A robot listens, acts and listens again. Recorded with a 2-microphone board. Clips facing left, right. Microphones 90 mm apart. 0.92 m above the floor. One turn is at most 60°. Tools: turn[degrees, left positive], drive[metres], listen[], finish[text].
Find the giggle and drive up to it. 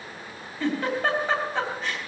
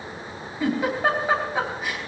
Action: turn[-30]
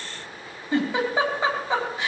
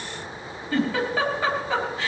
Thought: So it is at 20° left.
Action: turn[20]
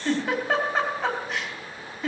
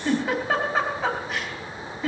Action: drive[1.0]
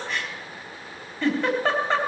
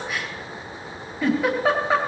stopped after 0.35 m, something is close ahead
Action: finish[Something is in my way. I am facing the giggle but have not reached it.]